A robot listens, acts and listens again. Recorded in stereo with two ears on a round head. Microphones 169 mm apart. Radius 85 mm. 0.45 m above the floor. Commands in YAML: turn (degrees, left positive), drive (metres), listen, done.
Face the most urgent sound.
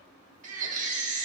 turn: -40
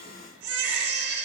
turn: -90
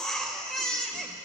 done: "Facing the baby crying."